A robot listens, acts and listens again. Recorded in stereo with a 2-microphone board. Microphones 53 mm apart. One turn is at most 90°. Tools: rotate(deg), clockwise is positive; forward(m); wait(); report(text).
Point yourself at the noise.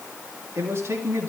rotate(55)
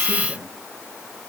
wait()
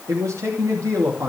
rotate(75)
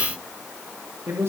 rotate(60)
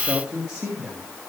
rotate(20)
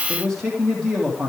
report("Found it: a man speaking, straight ahead, 2 to 4 m away.")